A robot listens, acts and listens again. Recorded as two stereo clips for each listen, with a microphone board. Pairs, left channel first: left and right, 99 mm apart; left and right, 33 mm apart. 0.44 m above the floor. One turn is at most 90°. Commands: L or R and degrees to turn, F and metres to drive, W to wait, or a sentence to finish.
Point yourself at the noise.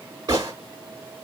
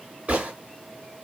R40
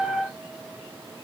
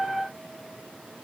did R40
W
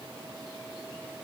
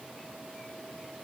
I heard a gunshot, but can't make it out now. It was about straight ahead or 100° right.